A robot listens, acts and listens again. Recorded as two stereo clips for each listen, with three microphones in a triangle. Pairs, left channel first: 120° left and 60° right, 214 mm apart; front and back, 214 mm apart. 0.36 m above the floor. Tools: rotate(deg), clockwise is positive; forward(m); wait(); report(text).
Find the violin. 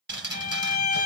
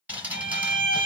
rotate(-165)
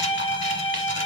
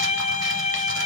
rotate(-55)
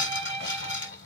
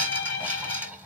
report("Found it: a violin, straight ahead.")